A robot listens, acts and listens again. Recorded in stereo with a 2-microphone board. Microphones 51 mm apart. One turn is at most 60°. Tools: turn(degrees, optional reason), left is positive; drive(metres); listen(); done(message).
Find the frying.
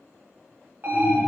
listen()
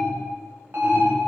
listen()
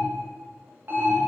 done("I can't make out frying to turn to.")